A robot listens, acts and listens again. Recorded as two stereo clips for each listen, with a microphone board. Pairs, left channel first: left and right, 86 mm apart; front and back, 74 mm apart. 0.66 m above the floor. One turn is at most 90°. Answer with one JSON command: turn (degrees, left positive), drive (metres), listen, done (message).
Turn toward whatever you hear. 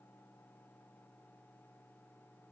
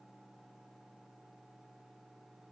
{"listen": true}
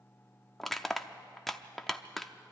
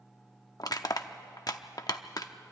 {"done": "Facing the crushing, under 1 m away."}